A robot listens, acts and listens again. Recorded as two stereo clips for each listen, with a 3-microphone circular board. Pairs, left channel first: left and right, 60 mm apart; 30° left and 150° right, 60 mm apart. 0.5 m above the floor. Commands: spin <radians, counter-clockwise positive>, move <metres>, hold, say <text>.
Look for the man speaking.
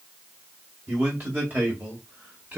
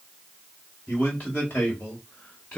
spin -0.61
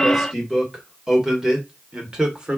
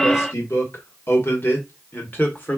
spin -0.35
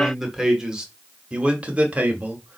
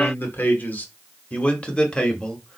spin -0.61
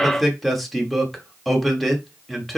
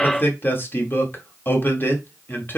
say Found it: a man speaking, straight ahead.